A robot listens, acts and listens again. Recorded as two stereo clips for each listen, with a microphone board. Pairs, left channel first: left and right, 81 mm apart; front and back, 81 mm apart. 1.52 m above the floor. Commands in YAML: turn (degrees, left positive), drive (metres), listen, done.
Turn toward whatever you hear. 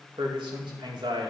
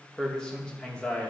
turn: -75
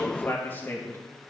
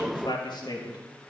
turn: 25
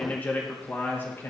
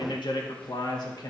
turn: 30
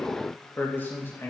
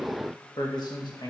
turn: 30
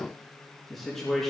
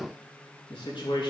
done: "Found it: a man speaking, straight ahead."